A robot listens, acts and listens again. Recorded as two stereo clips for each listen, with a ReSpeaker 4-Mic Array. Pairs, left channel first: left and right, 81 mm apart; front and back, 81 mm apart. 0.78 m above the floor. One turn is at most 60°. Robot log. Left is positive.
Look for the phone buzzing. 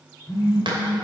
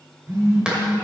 note: The phone buzzing: 130° left.
cmd yaw +60
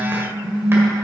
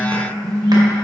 note: The phone buzzing is now 75° left.
cmd yaw +60
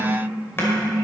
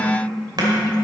note: The phone buzzing is now 20° left.
cmd yaw +20
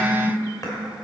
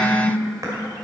end: Found it: a phone buzzing, straight ahead.